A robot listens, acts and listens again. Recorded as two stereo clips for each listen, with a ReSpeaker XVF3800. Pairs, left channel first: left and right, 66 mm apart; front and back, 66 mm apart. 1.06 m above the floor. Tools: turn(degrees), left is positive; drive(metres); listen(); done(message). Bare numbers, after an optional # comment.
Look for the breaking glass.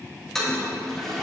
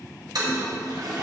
listen()
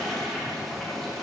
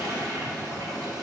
listen()
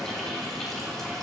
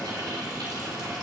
done("I can't make out breaking glass, only a toilet flushing.")